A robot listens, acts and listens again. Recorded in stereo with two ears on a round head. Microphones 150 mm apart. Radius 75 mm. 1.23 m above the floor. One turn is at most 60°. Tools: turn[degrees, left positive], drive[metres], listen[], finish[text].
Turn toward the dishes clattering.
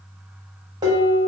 Thought: The dishes clattering: about 25° right or 155° right.
Action: turn[-25]
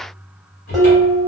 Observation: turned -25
Action: finish[Facing the dishes clattering.]